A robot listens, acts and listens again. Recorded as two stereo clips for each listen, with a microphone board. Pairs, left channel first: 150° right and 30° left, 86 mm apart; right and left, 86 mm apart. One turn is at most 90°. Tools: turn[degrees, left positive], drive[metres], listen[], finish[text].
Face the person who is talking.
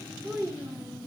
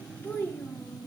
Thought: The child speaking: 20° right.
Action: turn[-20]
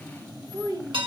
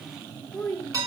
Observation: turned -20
Thought: The child speaking is now 10° right.
Action: turn[-10]
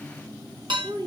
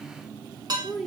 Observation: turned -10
Action: finish[Found it: a child speaking, straight ahead, 1 to 2 m away.]